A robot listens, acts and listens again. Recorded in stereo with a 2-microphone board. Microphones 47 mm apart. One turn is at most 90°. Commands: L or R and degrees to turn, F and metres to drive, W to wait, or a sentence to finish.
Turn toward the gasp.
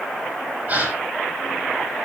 R40
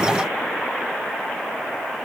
W
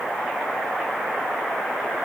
I heard a gasp, but can't make it out now. It was about straight ahead or 100° right.